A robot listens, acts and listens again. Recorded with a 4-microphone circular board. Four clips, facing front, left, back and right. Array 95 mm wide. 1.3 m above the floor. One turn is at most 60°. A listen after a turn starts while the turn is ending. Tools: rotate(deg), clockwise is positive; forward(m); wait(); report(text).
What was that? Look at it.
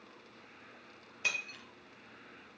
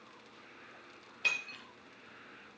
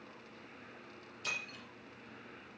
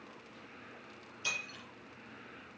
rotate(-30)
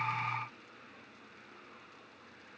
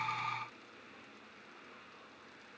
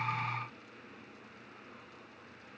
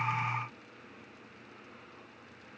report("I heard breaking glass from this way, but can't make it out now.")